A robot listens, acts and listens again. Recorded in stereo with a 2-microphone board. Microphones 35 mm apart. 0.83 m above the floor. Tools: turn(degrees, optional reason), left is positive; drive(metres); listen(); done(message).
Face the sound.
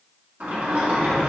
turn(degrees=-60, reason="The sliding door: about 60° right or 120° right.")
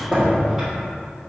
turn(degrees=-10, reason="So it is at 10° right.")
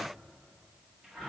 done("Found it: a sliding door, straight ahead, 1 to 2 m away.")